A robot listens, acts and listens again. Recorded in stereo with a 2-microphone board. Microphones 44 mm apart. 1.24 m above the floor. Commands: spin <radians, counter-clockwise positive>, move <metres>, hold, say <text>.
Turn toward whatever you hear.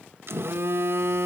spin -1.13
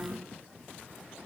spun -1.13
say Found it: a phone buzzing, straight ahead, 1 to 2 m away.